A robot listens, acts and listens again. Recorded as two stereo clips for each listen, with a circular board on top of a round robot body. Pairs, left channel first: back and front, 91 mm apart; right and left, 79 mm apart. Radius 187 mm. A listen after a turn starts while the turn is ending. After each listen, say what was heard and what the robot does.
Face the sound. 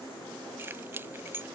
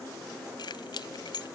The keys jangling: 65° right. Turn 65° right.
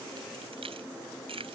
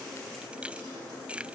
The keys jangling is now 15° left. Turn 15° left.
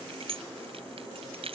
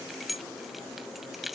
Facing the keys jangling.